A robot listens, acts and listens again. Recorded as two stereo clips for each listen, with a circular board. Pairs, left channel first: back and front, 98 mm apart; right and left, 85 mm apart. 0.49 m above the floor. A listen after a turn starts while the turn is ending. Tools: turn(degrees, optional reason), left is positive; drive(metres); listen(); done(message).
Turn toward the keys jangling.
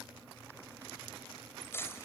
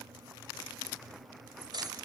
turn(degrees=120, reason="The keys jangling: 120° left.")
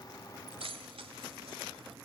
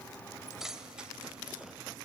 done("Facing the keys jangling, 1 to 2 m away.")